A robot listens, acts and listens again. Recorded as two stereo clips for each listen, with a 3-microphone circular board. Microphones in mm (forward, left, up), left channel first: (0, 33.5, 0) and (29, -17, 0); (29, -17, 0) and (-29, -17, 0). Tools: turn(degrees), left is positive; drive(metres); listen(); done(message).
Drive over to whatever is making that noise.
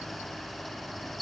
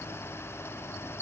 listen()
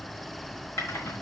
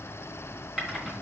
turn(degrees=105)
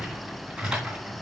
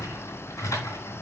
turn(degrees=15)
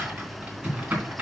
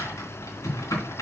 drive(metres=1.0)
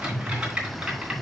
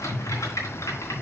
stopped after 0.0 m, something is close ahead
turn(degrees=10)
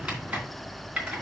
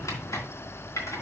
turn(degrees=10)
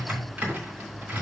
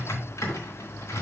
done("Blocked. The typing on a keyboard is further on, straight ahead.")